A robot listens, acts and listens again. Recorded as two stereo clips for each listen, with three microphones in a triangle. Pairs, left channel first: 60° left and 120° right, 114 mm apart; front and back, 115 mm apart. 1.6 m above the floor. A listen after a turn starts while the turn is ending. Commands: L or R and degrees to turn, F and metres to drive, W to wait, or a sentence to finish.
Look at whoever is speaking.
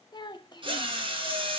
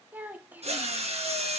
L105
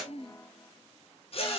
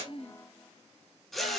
W
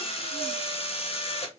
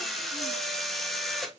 W
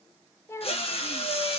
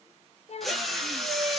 Facing the child speaking, under 1 m away.